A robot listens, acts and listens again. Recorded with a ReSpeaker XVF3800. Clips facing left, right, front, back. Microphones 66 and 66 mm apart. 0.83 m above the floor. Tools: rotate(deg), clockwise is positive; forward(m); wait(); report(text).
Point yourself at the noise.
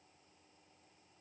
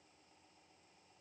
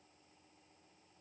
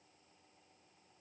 wait()
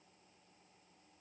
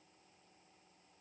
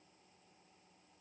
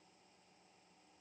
wait()
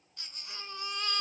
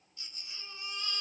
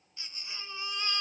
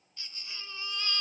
rotate(-70)
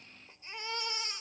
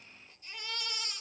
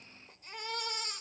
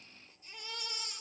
rotate(-25)
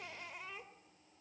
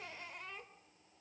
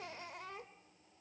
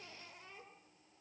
report("Found it: a baby crying, straight ahead, 2 to 4 m away.")